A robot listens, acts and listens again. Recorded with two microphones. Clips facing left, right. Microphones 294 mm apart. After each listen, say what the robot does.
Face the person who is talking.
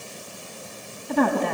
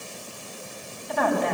Turn 40° left.
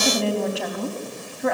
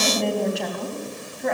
Found it: a woman speaking, straight ahead, over 4 m away.